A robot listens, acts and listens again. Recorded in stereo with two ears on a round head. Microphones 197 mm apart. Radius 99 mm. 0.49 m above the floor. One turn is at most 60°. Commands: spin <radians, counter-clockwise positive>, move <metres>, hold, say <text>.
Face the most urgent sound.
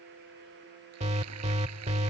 spin -0.52
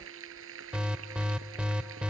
say Found it: an alarm, straight ahead.